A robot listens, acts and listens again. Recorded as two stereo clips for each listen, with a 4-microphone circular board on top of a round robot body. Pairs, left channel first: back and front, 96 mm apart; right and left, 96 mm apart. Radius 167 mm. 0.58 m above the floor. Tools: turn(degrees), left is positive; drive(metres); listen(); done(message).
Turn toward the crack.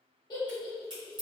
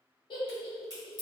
turn(degrees=40)
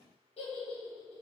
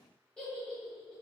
done("I heard a crack from this way, but can't make it out now.")